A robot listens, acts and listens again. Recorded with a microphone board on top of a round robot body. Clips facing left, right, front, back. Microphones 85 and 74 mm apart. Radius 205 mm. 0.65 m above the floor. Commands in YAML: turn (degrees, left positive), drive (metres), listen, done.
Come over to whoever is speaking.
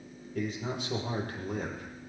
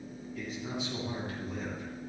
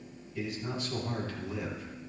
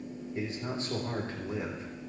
turn: 120
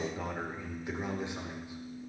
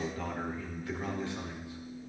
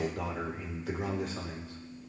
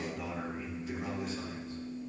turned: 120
turn: 20
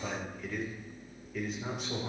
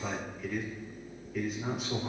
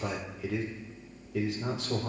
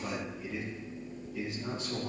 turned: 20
drive: 1.0
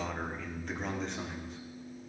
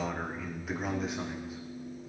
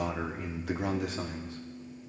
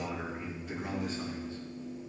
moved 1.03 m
drive: 1.0
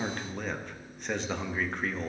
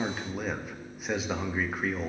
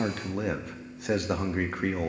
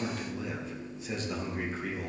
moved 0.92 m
turn: -10
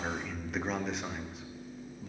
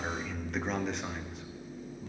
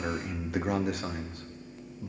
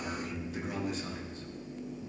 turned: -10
drive: 1.0
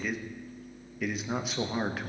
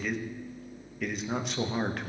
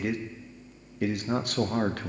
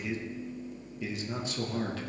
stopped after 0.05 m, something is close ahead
done: "I am next to the man speaking."